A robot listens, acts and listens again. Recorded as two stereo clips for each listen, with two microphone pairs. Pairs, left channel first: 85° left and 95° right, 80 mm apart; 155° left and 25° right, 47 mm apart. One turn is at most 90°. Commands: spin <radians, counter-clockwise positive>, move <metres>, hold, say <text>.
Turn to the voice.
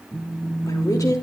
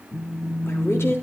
spin 1.57
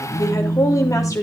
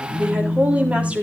spin 0.61
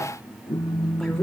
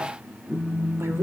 hold
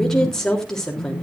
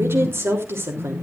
say Facing the woman speaking, 2 to 4 m away.